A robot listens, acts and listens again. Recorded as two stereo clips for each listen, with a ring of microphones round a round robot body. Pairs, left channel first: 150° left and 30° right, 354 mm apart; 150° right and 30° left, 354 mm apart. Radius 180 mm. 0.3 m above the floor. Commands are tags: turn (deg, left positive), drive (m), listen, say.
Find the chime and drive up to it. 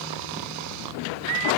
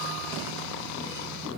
<listen/>
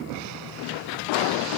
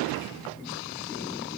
<listen/>
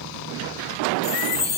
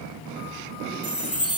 <turn deg="160"/>
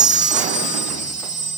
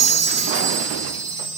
<turn deg="40"/>
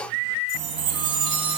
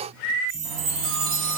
<drive m="1.0"/>
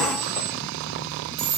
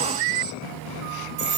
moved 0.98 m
<drive m="1.0"/>
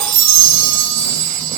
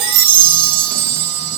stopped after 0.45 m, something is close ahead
<say>Arrived at the chime, straight ahead.</say>